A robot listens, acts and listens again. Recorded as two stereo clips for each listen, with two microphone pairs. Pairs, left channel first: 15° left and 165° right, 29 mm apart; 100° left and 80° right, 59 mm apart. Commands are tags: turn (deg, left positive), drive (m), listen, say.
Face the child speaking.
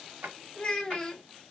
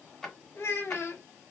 <turn deg="70"/>
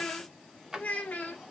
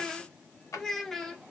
<turn deg="10"/>
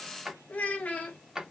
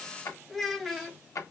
<say>Found it: a child speaking, straight ahead.</say>